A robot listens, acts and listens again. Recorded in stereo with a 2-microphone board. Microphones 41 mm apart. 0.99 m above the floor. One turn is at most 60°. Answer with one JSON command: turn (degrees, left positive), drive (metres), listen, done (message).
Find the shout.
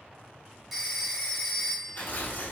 {"listen": true}
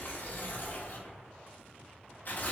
{"listen": true}
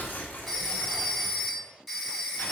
{"done": "I can't make out a shout to turn to."}